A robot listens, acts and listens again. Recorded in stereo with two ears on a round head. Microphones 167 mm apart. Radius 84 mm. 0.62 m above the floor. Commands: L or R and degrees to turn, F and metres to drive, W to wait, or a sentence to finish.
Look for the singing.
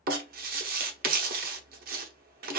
W
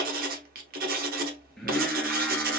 L30
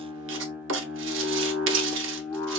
L30
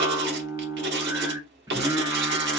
R20
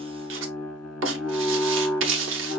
Found it: singing, straight ahead, 1 to 2 m away.